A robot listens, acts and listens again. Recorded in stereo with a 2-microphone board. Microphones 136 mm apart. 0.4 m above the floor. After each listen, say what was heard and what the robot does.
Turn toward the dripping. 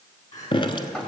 The dripping: about 35° left or 145° left. Turn 35° left.
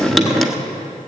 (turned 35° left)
Facing the dripping, under 1 m away.